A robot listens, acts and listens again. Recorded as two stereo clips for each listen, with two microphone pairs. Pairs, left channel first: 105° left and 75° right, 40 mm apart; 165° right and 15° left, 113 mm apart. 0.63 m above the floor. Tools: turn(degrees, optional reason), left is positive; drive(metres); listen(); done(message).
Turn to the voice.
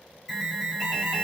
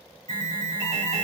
listen()
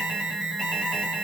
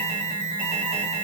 listen()
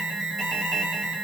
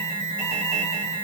done("I can't make out anyone speaking to turn to.")